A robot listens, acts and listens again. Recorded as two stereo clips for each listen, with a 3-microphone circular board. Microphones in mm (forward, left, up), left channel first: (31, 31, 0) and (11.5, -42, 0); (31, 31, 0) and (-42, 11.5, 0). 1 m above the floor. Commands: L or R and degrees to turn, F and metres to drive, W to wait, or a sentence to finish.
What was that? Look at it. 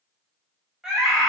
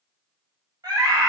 L165
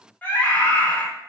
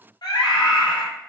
Found it: a scream, straight ahead, 2 to 4 m away.